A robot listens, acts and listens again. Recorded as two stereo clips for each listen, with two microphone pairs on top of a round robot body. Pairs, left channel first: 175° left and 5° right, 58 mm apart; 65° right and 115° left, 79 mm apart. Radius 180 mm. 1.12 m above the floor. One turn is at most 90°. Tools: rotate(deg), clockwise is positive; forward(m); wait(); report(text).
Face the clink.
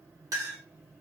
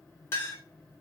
report("Found it: a clink, straight ahead, 1 to 2 m away.")